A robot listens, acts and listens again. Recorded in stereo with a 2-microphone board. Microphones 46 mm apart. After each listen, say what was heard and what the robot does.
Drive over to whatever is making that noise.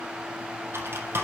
The typing on a keyboard: about 60° right or 120° right. Turn 60° right.
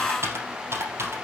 So it is at 60° right. Turn 60° right.
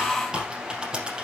The typing on a keyboard is now 15° right. Turn 15° right.
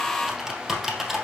Drive 1.0 m forward.
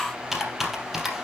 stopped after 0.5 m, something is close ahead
Blocked. The typing on a keyboard is further on, straight ahead.